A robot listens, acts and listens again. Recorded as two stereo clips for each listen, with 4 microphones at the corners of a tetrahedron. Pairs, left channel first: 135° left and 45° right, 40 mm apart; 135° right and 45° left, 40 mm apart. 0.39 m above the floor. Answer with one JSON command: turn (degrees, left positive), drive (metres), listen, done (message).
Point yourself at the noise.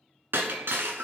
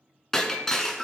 {"turn": -55}
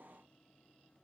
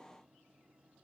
{"done": "I heard breaking glass from this way, but can't make it out now."}